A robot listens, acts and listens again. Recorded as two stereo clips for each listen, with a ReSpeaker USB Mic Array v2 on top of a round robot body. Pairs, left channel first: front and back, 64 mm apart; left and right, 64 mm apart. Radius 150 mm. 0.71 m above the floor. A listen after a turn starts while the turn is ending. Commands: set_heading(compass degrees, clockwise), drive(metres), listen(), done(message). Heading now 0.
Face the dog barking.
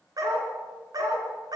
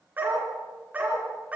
set_heading(160)
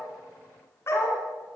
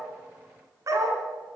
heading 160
set_heading(210)
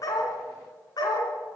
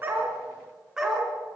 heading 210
set_heading(220)
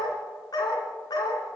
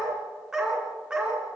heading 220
set_heading(230)
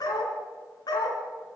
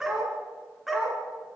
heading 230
done("Facing the dog barking.")